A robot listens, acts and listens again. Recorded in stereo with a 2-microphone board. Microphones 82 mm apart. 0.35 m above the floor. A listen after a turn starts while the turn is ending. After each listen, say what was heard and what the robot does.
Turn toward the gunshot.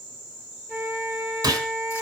The gunshot: about 45° right or 135° right. Turn 45° right.
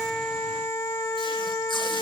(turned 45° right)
Keep listening.
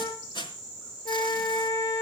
I heard a gunshot, but can't make it out now. It was about straight ahead or 90° right.